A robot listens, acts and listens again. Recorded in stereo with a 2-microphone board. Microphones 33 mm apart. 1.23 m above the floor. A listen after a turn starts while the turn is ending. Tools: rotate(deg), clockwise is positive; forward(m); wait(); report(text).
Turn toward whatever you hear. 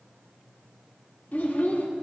rotate(-70)
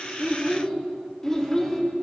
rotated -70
rotate(-15)
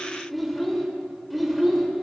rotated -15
report("Facing the child speaking, 2 to 4 m away.")